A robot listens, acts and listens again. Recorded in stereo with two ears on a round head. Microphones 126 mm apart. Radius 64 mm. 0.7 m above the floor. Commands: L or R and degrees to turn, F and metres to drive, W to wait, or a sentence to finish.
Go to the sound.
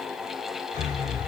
L90
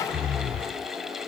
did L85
F1.0
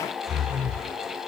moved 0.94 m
F1.0
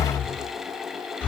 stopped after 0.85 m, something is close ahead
L15
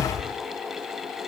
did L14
I am next to the breathing.